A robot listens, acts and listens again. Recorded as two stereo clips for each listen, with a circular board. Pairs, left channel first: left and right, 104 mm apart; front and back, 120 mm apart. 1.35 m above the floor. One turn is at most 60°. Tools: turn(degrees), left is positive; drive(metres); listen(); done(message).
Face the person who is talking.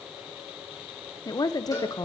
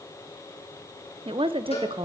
turn(degrees=60)
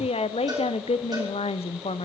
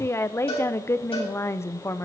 turn(degrees=60)
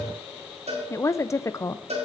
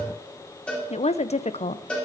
turn(degrees=25)
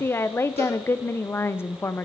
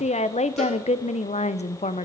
turn(degrees=20)
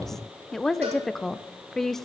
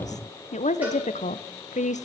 done("Facing the woman speaking, under 1 m away.")